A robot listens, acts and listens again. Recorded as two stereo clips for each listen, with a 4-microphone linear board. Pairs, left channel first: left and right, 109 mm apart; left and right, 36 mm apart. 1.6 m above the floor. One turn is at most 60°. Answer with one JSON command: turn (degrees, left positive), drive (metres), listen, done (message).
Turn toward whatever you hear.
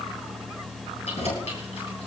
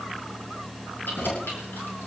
{"turn": 60}
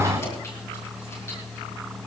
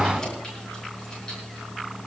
{"turn": 25}
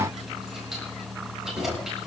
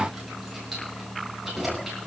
{"done": "Found it: keys jangling, straight ahead, over 4 m away."}